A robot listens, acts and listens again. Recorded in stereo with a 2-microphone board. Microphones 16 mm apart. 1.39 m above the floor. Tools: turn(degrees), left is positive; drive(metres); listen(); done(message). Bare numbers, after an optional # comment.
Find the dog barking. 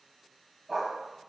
turn(30)
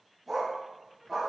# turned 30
turn(-30)
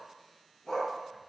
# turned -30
# So it is at 35° left.
turn(35)
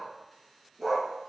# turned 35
# The dog barking is now 15° right.
turn(-15)
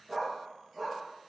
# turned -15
done("Facing the dog barking.")